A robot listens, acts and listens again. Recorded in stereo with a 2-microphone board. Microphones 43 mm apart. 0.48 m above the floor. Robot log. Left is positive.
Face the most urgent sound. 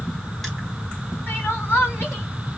note: The crying: about 65° left or 115° left.
cmd yaw +65
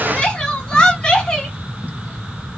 note: So it is at 20° left.
cmd yaw +20
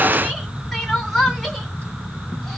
end: Found it: crying, straight ahead, 2 to 4 m away.